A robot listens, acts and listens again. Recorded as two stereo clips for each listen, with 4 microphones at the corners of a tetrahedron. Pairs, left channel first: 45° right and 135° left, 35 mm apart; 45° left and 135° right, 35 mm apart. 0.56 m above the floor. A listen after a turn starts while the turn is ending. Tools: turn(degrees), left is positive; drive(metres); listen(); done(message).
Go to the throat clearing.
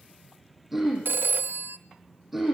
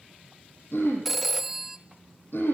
turn(degrees=50)
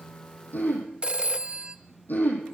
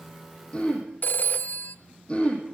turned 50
turn(degrees=-15)
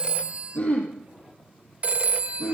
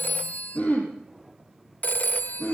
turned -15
drive(metres=1.0)
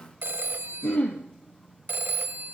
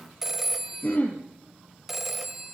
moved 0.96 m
drive(metres=1.0)
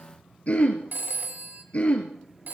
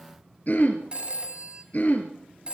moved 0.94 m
drive(metres=1.0)
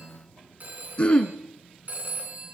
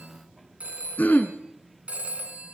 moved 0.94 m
turn(degrees=10)
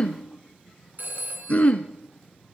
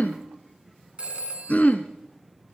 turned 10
drive(metres=1.0)
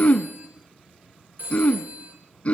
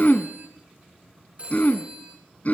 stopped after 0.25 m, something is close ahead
done("I am next to the throat clearing.")